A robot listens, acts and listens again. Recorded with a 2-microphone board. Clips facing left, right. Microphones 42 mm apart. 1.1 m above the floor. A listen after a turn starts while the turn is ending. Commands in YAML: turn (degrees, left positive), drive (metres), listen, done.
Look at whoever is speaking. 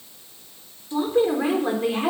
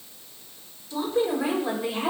turn: 35
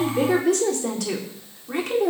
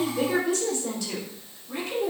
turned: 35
turn: 100
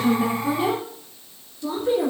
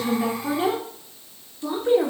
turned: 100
turn: -35
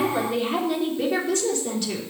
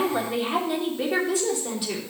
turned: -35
turn: -10
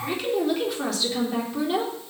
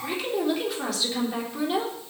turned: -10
done: "Facing the woman speaking."